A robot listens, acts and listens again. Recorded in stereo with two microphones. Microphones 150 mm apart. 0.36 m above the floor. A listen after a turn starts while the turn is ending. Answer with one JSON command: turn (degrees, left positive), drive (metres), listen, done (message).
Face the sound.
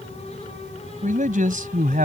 {"turn": -65}
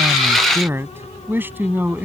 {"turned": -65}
{"turn": -10}
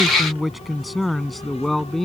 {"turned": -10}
{"done": "Facing the man speaking."}